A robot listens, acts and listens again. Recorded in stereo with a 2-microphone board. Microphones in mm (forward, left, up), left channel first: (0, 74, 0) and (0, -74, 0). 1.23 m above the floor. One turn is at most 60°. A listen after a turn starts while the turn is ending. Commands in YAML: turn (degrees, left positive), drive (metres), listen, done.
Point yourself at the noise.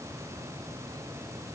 listen: true
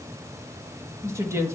turn: -20
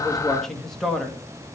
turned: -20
done: "Facing the woman speaking, 1 to 2 m away."